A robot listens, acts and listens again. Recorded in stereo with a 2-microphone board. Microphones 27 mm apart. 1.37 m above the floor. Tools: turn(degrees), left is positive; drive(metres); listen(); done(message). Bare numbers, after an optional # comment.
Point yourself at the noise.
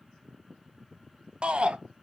# The shout: about 45° right or 135° right.
turn(-45)
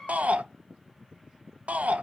# So it is at 85° right.
turn(-85)
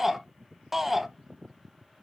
done("Facing the shout.")